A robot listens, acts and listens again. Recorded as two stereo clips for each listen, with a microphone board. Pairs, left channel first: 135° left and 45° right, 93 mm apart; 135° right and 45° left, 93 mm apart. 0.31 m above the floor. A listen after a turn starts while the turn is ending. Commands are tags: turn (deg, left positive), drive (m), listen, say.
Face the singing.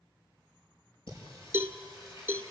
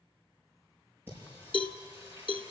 <turn deg="110"/>
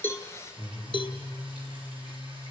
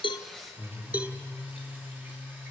<turn deg="-30"/>
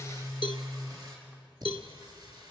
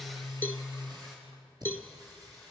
<say>Facing the singing.</say>